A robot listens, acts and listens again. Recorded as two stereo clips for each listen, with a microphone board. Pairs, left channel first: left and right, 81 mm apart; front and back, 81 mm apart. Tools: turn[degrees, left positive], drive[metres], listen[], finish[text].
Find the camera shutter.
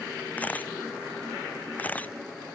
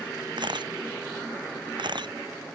Thought: The camera shutter: 160° left.
Action: turn[160]
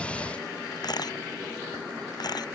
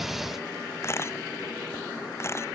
Thought: The camera shutter is now 55° left.
Action: turn[55]
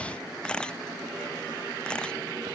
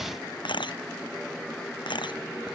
Thought: The camera shutter is now 10° left.
Action: turn[10]
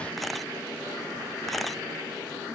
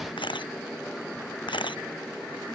Action: finish[Facing the camera shutter.]